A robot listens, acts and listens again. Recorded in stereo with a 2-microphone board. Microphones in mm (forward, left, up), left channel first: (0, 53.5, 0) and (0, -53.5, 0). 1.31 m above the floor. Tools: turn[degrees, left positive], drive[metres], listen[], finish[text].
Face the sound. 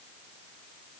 Action: listen[]
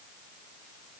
Action: listen[]
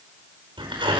Thought: The tearing paper: about 50° right or 130° right.
Action: turn[-50]
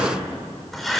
Action: finish[Facing the tearing paper, over 4 m away.]